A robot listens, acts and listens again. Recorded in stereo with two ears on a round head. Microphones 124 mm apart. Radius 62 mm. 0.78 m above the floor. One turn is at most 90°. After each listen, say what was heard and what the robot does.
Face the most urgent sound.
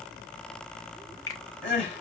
The crying: about 45° left or 135° left. Turn 45° left.
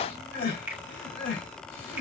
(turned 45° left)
So it is at 90° left. Turn 90° left.
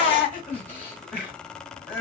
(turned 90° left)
The crying is now 10° left. Turn 10° left.
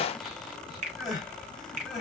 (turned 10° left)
Facing the crying, 2 to 4 m away.